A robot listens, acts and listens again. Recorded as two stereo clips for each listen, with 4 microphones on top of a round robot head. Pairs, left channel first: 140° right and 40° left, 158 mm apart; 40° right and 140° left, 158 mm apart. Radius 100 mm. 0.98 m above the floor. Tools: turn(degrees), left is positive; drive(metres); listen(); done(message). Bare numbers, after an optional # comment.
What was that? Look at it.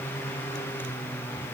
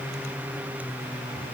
listen()
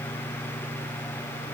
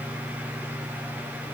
listen()
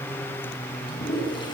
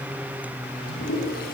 # The toilet flushing: 75° right.
turn(-75)
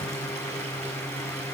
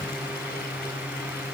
listen()
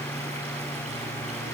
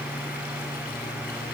listen()
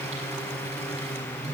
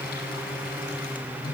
done("Facing where the toilet flushing came from. I can't hear it now.")